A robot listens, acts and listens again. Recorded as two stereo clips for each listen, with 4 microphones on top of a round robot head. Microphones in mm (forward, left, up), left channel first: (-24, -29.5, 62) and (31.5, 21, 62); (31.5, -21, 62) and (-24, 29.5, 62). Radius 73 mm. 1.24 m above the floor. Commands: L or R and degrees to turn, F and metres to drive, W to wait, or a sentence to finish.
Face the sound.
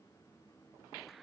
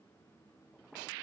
W
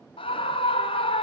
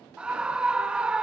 R145
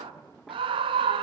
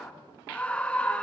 L35
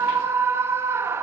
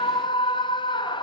R15
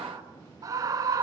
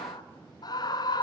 Found it: a scream, straight ahead, 1 to 2 m away.